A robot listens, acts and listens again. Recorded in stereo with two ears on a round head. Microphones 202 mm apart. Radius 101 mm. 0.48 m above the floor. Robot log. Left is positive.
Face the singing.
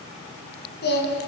note: The singing: about 50° left or 130° left.
cmd yaw +50
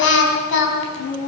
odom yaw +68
note: So it is at 60° left.
cmd yaw +60
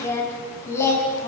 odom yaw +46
note: The singing is now 15° left.
cmd yaw +15
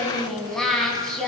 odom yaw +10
end: Found it: singing, straight ahead, over 4 m away.